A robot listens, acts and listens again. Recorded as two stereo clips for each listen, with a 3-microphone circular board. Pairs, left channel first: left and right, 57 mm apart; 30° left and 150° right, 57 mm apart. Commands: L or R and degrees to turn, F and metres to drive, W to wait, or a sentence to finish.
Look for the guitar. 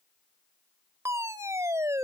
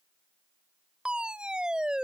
W
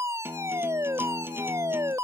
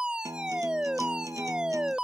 R140
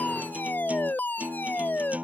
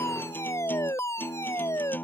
R25
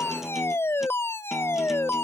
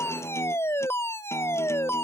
W
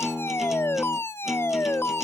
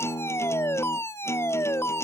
Facing the guitar.